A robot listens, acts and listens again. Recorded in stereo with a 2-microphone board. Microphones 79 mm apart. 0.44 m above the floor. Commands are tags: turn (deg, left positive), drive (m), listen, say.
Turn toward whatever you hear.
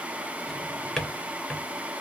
<turn deg="30"/>
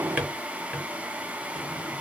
<turn deg="-25"/>
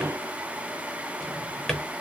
<say>Found it: a drawer, straight ahead, under 1 m away.</say>